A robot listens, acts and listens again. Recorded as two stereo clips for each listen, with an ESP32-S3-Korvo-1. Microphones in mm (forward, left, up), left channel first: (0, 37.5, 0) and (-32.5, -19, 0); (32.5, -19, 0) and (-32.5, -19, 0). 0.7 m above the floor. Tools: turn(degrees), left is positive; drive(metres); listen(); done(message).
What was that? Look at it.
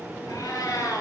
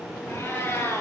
turn(degrees=45)
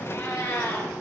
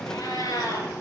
turn(degrees=10)
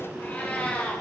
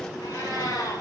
done("Found it: a cat meowing, straight ahead.")